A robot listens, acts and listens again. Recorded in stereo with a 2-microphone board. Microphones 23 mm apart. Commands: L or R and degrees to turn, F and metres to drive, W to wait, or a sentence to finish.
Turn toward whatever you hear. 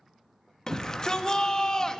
L30
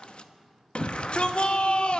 L120
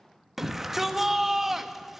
R15
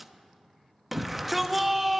Found it: a shout, straight ahead, under 1 m away.